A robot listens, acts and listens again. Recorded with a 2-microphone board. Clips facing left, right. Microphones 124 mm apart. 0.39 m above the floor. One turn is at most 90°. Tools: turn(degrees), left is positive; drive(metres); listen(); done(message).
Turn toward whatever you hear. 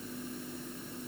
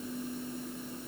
listen()
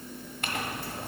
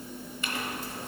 turn(degrees=60)
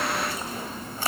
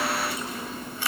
turn(degrees=45)
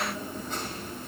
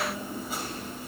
listen()
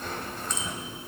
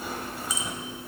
turn(degrees=-10)
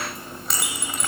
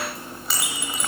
done("Found it: a clink, straight ahead.")